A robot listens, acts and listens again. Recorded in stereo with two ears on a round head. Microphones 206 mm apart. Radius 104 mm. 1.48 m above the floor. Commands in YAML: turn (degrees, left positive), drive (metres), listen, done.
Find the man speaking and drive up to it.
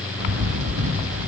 listen: true
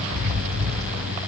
listen: true
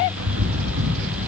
done: "I can't make out a man speaking, only a bird."